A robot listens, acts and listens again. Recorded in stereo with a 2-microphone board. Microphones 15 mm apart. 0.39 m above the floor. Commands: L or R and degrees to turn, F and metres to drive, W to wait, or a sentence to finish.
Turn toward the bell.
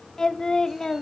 W
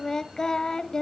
W
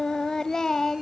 I can't make out a bell to turn to.